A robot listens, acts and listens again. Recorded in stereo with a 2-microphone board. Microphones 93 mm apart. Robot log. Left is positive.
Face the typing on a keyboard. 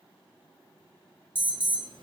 cmd idle
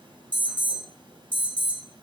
cmd idle
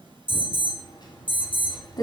note: The typing on a keyboard: about 50° left or 130° left.
cmd yaw +50
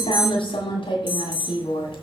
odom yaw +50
note: So it is at 80° left.
cmd yaw +80
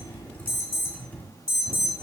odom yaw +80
note: The typing on a keyboard is now 20° left.
cmd yaw +20
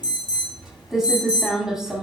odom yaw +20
end: Facing the typing on a keyboard, 1 to 2 m away.